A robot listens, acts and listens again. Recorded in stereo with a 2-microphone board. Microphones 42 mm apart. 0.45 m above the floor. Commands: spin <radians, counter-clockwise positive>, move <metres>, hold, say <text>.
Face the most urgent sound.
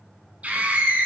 spin -0.61
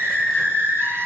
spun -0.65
spin -1.83
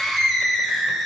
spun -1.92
say Facing the scream, 2 to 4 m away.